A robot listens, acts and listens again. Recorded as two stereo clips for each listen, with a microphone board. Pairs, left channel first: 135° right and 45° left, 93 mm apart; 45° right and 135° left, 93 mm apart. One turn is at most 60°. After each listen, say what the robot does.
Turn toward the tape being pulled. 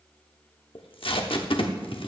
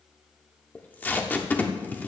Turn 60° right.
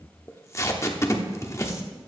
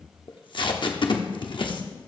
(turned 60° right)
Turn 60° right.
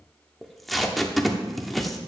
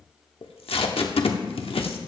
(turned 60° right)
Turn 45° right.
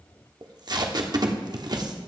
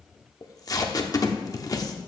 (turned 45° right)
Found it: tape being pulled, straight ahead, 1 to 2 m away.